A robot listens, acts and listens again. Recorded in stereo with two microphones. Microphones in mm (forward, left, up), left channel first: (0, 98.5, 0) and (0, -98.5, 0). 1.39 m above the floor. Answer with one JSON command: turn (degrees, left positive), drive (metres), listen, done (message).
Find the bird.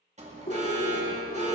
{"turn": 45}
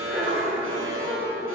{"done": "Facing the bird, 2 to 4 m away."}